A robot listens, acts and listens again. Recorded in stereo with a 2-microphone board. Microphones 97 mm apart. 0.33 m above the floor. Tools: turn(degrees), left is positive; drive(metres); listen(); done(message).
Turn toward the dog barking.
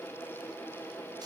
listen()
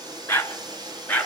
turn(degrees=20)
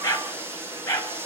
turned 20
turn(degrees=30)
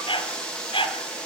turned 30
turn(degrees=120)
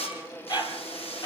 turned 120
turn(degrees=45)
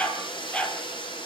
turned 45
turn(degrees=10)
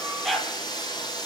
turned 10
done("Facing the dog barking.")